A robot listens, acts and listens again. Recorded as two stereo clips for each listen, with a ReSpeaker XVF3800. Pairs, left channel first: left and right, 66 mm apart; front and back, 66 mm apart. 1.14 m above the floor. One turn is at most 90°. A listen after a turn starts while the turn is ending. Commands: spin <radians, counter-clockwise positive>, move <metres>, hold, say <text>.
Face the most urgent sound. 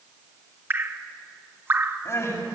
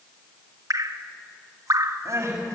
spin 1.57
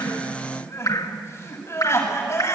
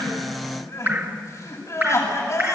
spin 0.70
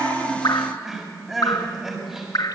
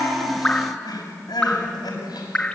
say Facing the crying.